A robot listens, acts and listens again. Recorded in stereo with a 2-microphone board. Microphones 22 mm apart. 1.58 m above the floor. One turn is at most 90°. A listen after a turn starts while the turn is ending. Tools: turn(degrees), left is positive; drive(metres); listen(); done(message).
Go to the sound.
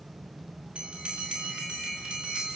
turn(degrees=-90)
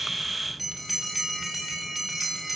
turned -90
turn(degrees=-10)
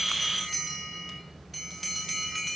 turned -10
drive(metres=1.0)
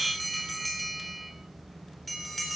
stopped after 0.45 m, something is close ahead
done("Something is in my way. I am facing the bell but have not reached it.")